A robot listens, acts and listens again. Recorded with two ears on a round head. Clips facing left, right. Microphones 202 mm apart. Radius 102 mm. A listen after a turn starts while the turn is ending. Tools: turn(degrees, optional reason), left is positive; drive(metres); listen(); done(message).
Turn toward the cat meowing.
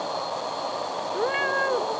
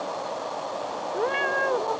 turn(degrees=30)
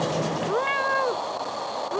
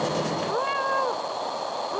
turn(degrees=150, reason="So it is at 150° left.")
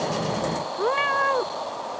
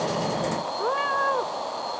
turn(degrees=30, reason="The cat meowing is now 30° left.")
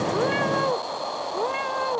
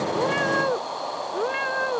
turn(degrees=-15, reason="The cat meowing is now 15° right.")
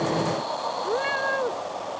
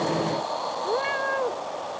done("Facing the cat meowing.")